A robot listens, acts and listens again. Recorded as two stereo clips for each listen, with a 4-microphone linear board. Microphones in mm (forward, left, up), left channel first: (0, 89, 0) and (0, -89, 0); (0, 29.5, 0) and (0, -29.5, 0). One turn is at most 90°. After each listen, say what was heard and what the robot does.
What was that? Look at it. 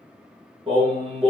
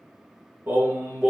The singing: about 30° right or 150° right. Turn 30° right.
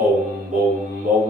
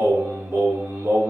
The singing: about 40° right or 140° right. Turn 40° right.
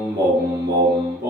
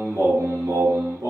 So it is at 120° right. Turn 90° right.
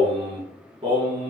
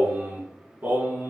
The singing is now 35° right. Turn 35° right.
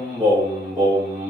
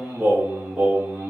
The singing is now 20° right. Turn 20° right.
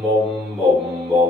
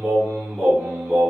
Facing the singing.